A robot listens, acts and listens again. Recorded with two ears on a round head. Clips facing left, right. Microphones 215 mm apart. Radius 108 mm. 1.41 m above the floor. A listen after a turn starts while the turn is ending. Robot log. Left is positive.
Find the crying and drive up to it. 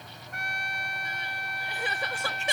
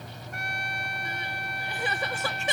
cmd yaw -90
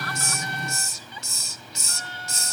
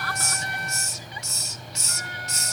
cmd idle
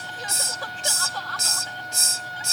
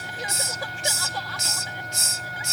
note: The crying is now 10° right.
cmd yaw -10
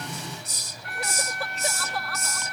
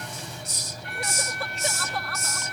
cmd fwd 1.0
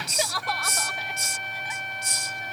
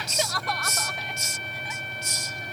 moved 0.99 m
cmd fwd 1.0
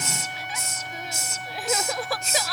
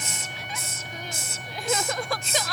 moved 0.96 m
cmd fwd 1.0
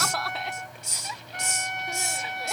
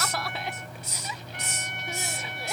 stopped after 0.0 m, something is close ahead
end: Arrived at the crying, straight ahead.